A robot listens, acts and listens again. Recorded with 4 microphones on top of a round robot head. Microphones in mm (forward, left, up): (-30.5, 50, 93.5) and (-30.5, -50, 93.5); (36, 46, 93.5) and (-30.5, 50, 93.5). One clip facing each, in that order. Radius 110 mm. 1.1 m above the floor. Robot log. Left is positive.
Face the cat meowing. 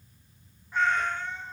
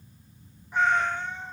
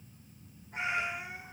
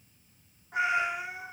note: The cat meowing: 165° right.
cmd yaw -165
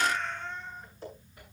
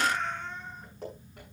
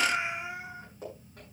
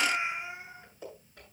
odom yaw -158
note: The cat meowing is now 10° right.
cmd yaw -10
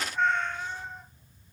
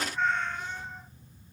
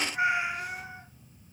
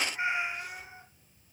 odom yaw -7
end: Found it: a cat meowing, straight ahead, 2 to 4 m away.